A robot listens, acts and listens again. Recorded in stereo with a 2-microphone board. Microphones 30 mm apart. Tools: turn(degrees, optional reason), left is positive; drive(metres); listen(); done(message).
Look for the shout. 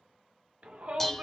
turn(degrees=-55, reason="The shout: about 55° right or 125° right.")
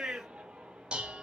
turn(degrees=-50, reason="So it is at 50° right.")
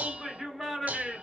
done("Found it: a shout, straight ahead, 1 to 2 m away.")